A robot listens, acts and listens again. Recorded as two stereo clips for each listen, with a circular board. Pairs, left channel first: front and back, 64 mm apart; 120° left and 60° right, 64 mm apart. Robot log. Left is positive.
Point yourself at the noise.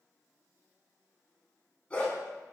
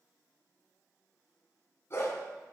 note: The dog barking: 70° left.
cmd yaw +70
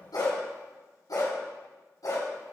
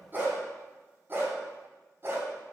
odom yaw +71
note: The dog barking is now 10° right.
cmd yaw -10
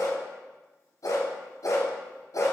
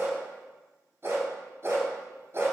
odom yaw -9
note: The dog barking is now 15° right.
cmd yaw -15
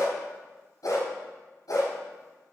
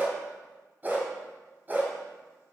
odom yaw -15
end: Facing the dog barking.